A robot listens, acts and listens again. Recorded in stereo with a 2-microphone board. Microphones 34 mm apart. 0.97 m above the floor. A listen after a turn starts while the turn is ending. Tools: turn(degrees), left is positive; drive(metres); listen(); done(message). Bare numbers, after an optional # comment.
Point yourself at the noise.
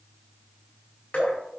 # The dripping: about 35° left or 145° left.
turn(35)
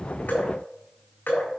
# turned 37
# So it is at 105° left.
turn(105)
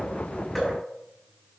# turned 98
# The dripping is now 10° left.
turn(10)
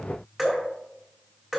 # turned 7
done("Facing the dripping.")